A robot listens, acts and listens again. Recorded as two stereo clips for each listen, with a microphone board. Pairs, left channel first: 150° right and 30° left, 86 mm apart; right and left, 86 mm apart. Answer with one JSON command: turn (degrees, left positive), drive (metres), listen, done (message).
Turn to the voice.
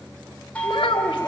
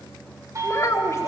{"turn": -145}
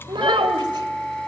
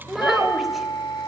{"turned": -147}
{"done": "Found it: a child speaking, straight ahead, 2 to 4 m away."}